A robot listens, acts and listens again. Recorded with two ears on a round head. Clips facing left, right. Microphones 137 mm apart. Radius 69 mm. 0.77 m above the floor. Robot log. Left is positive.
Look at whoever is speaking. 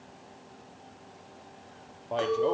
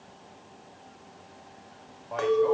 note: The man speaking: about 30° left or 150° left.
cmd yaw +30
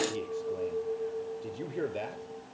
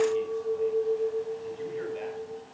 note: So it is at 120° left.
cmd yaw +120
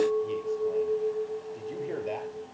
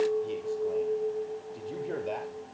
cmd idle
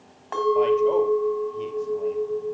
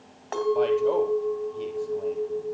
cmd idle
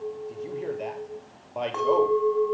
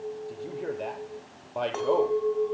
end: Facing the man speaking, 2 to 4 m away.